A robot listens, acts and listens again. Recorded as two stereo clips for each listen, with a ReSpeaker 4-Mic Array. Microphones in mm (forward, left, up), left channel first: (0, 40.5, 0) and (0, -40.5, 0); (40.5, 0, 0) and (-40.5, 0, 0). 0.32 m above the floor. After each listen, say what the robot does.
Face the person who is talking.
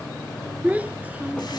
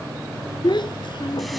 Turn 20° right.
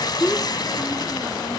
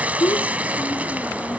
Found it: a child speaking, straight ahead.